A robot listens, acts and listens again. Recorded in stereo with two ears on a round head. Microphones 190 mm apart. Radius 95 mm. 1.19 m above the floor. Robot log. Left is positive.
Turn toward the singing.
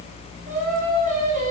note: The singing: about 35° right or 145° right.
cmd yaw -35
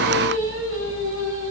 note: So it is at 115° right.
cmd yaw -115
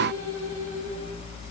cmd idle
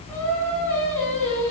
note: The singing is now 10° left.
cmd yaw +10
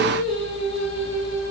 end: Found it: singing, straight ahead.